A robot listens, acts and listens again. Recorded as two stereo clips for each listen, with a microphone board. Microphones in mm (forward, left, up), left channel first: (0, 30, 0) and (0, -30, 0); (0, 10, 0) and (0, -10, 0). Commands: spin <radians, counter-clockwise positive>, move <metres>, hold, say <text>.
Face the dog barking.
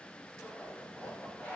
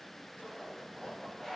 hold
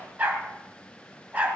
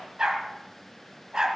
spin -0.44
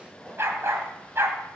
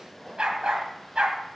spin -2.09
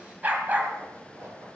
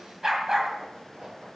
spin -0.61
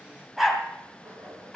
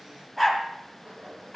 say Facing the dog barking, 2 to 4 m away.